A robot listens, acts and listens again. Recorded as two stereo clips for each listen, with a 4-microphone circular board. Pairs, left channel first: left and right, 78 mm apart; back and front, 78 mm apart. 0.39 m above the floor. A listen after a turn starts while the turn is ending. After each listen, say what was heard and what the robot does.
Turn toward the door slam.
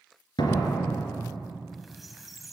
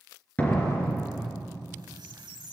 The door slam: 110° left. Turn 110° left.
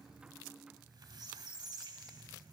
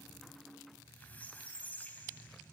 Facing where the door slam came from. I can't hear it now.